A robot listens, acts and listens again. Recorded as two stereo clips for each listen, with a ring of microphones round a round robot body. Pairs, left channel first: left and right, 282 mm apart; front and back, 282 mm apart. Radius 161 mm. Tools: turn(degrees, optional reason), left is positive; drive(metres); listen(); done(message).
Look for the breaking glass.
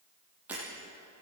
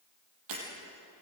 turn(degrees=-175, reason="The breaking glass: 175° right.")
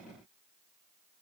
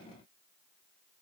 done("Facing where the breaking glass came from. I can't hear it now.")